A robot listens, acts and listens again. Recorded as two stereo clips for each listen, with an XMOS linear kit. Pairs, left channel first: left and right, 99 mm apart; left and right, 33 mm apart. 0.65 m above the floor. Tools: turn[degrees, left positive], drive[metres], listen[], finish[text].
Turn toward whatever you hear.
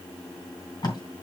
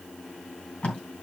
Thought: The tape being pulled: about 45° left or 135° left.
Action: turn[45]
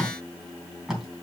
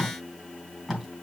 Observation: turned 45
Action: finish[Facing the tape being pulled.]